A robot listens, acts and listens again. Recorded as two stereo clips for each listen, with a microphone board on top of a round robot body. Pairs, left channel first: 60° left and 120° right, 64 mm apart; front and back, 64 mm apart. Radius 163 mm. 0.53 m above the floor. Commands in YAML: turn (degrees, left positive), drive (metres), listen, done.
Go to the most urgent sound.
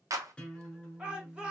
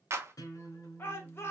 turn: -45
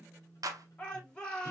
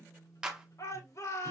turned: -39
turn: -10
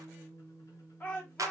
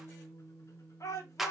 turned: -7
drive: 1.0
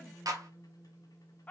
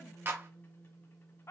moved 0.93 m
drive: 1.0
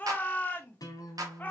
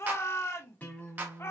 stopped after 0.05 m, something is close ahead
turn: 10
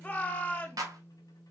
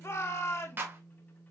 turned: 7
done: "I am next to the shout."